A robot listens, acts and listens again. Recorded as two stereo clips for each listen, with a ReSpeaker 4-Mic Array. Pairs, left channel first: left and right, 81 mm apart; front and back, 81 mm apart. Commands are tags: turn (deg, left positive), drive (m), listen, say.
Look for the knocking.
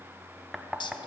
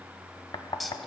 <say>Found it: knocking, straight ahead.</say>